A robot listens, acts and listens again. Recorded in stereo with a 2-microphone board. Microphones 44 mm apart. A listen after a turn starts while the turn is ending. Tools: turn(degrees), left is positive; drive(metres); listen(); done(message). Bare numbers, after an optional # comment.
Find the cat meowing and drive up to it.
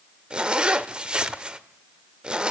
listen()
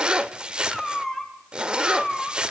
turn(30)
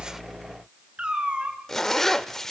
# So it is at 25° right.
turn(-25)
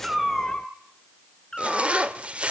# The cat meowing is now 15° left.
turn(15)
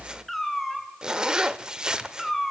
drive(1.0)
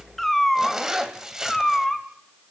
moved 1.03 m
drive(1.0)
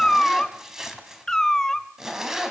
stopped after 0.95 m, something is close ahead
# The cat meowing is now 10° left.
turn(10)
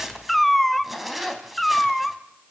done("Arrived at the cat meowing, straight ahead.")